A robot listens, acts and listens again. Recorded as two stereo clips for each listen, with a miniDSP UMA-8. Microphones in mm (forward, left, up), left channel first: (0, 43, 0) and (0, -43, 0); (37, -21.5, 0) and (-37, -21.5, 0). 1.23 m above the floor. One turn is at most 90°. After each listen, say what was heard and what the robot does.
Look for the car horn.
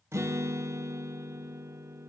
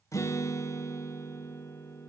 Keep listening.
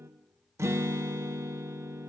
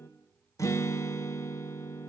Keep listening.
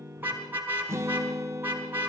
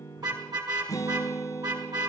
The car horn: 155° right. Turn 90° right.
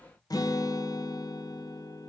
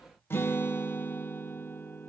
Nothing new. It was at 65° right. Turn 65° right.
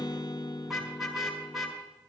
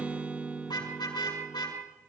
Found it: a car horn, straight ahead, over 4 m away.